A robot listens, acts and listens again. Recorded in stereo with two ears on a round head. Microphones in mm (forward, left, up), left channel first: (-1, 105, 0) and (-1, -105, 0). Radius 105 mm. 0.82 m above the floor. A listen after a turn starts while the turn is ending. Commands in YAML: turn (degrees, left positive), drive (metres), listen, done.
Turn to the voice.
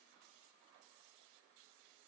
listen: true
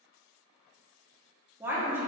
turn: -30
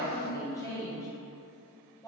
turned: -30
turn: 15
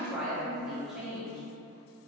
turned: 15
done: "Found it: a woman speaking, straight ahead, under 1 m away."